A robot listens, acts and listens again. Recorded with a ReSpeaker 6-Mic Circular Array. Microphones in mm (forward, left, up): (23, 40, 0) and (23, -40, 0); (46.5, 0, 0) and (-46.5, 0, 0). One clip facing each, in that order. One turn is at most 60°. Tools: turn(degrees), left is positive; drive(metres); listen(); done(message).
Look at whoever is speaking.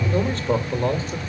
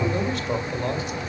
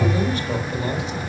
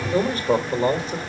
turn(degrees=60)
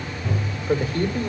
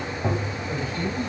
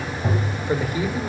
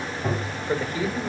turn(degrees=60)
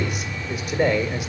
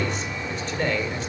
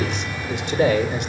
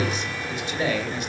turn(degrees=10)
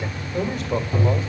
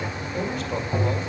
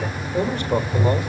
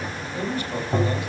done("Found it: a man speaking, straight ahead, 1 to 2 m away.")